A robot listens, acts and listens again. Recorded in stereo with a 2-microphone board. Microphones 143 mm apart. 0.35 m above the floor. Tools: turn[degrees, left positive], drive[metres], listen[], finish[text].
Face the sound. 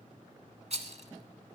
Thought: The rattle: about 50° right or 130° right.
Action: turn[-50]
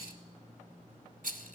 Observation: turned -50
Thought: So it is at 75° right.
Action: turn[-75]
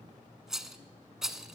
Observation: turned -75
Action: finish[Facing the rattle.]